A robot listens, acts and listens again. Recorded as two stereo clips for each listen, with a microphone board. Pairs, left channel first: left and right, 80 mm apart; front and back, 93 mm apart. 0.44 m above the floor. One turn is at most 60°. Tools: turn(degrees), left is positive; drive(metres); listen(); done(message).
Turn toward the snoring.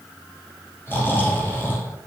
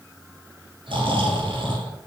turn(degrees=60)
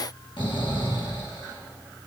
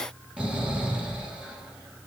turn(degrees=60)
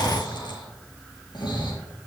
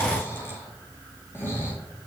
turn(degrees=60)
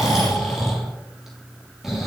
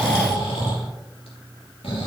done("Facing the snoring.")